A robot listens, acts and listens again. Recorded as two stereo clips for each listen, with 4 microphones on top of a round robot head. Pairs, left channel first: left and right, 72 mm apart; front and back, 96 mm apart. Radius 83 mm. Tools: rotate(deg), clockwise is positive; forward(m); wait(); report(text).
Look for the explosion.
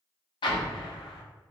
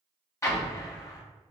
rotate(-60)
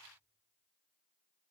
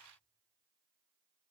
report("I heard an explosion from this way, but can't make it out now.")